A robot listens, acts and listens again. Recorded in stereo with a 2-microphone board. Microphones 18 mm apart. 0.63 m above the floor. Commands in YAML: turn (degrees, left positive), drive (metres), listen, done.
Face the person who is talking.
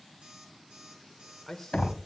turn: 30
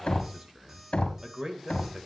turn: -40
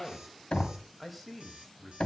turn: -15
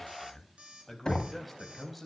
done: "Facing the man speaking."